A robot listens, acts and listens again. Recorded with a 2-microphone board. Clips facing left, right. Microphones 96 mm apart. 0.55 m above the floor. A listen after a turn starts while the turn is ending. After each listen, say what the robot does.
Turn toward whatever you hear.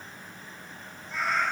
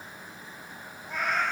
Turn 55° right.
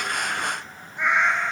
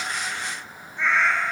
Turn 25° left.
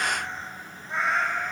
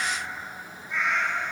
Turn 45° left.
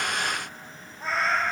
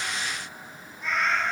Turn 40° left.
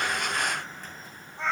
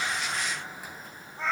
Found it: a cat meowing, straight ahead.